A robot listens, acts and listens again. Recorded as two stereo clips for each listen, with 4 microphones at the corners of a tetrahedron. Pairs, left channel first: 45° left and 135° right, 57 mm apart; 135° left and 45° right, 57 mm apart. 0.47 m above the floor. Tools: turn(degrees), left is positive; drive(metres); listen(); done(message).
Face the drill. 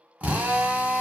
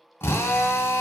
turn(degrees=165)
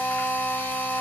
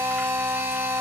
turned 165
done("Facing the drill.")